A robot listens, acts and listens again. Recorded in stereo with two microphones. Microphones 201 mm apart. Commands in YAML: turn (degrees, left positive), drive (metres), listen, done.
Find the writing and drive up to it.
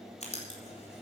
turn: 35
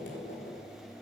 turn: 115
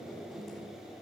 drive: 1.0
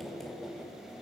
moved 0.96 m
drive: 1.0
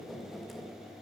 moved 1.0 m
drive: 1.0
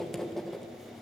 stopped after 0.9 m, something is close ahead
done: "I am next to the writing."